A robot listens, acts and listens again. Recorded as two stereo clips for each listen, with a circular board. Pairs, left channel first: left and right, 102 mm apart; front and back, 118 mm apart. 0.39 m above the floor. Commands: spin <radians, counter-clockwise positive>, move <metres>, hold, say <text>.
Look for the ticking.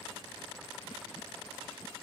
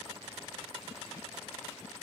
hold
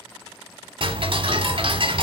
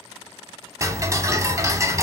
spin -2.09
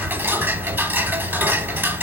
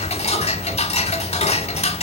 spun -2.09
spin -0.35
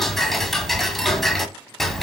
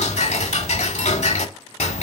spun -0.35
say Found it: ticking, straight ahead.